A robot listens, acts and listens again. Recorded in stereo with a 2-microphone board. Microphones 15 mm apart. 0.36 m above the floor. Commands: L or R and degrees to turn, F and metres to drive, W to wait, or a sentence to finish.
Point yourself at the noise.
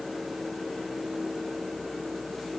W
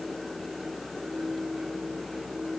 W
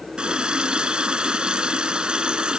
R90
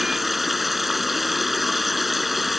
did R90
Found it: a running tap, straight ahead.